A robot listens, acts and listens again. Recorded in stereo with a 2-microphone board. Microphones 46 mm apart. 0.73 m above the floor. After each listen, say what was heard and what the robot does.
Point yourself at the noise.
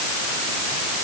Keep listening.
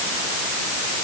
Keep listening.
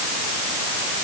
I can't make out anything to turn to.